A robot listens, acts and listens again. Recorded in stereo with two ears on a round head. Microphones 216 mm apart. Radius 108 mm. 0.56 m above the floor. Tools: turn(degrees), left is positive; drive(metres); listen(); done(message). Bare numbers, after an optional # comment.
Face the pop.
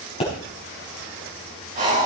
# The pop: about 25° left or 155° left.
turn(25)
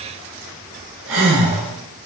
listen()
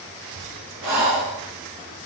done("I heard a pop, but can't make it out now. It was about straight ahead or 130° left.")